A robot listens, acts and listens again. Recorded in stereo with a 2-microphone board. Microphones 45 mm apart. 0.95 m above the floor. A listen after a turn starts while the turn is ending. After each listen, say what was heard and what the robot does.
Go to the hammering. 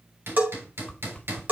The hammering: about 60° right or 120° right. Turn 60° right.
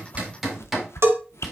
Drive 1.0 m forward.
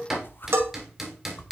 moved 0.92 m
Drive 1.0 m forward.
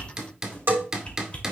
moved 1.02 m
The hammering is now 10° right. Turn 10° right.
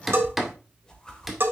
Drive 1.0 m forward.
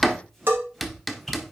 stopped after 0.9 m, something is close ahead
I am next to the hammering.